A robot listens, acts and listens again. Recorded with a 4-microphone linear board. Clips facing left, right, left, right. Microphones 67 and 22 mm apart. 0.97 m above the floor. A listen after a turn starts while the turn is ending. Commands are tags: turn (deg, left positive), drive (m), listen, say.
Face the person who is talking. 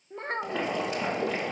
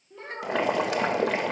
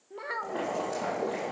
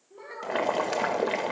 <turn deg="45"/>
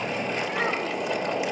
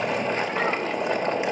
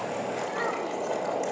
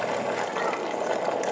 <listen/>
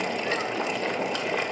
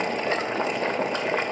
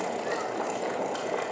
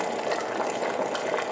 <listen/>
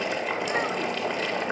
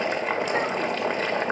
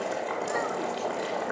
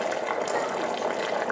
<say>I heard a child speaking, but can't make it out now. It was about straight ahead or 90° left.</say>